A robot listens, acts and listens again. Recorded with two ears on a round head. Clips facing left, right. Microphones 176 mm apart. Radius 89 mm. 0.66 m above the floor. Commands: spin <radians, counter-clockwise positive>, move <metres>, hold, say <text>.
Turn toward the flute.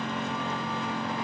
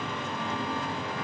hold
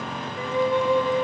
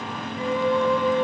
spin 1.13
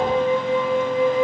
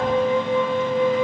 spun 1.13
spin 0.79
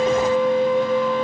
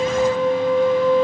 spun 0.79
say Facing the flute.